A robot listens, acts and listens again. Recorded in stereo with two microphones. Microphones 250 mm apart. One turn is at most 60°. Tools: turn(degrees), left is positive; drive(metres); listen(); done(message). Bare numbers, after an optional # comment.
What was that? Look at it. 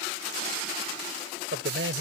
# The man speaking: about 55° right or 125° right.
turn(-55)
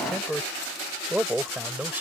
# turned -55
done("Facing the man speaking.")